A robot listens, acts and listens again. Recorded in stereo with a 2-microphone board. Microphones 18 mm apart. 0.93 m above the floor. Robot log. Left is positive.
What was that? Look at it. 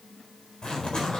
note: The zipper: about 50° left or 130° left.
cmd yaw +50
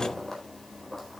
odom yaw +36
note: So it is at 15° left.
cmd yaw +15
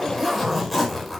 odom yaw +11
end: Found it: a zipper, straight ahead, over 4 m away.